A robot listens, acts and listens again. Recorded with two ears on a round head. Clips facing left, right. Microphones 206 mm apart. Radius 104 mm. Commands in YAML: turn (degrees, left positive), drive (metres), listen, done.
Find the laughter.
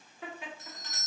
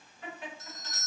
turn: 65
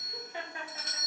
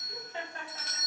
turn: 15
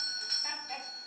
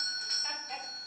listen: true
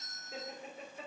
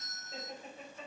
turn: 15
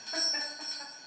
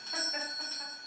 listen: true
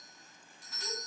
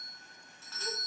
listen: true
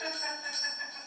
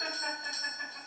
done: "I heard laughter from this way, but can't make it out now."